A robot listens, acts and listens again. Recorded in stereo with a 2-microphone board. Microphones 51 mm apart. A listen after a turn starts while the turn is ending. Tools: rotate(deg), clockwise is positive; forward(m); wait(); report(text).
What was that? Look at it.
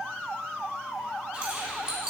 rotate(20)
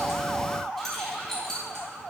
rotate(-10)
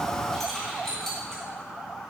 rotate(-10)
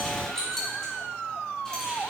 rotate(-10)
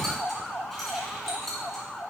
report("Found it: keys jangling, straight ahead.")